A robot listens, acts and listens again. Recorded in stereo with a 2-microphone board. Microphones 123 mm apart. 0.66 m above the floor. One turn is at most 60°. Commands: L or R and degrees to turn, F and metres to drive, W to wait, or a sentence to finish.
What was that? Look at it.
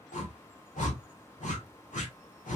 L60
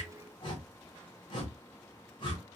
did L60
L40
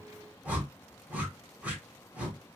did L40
R10
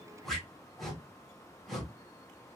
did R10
Found it: a whoosh, straight ahead, 1 to 2 m away.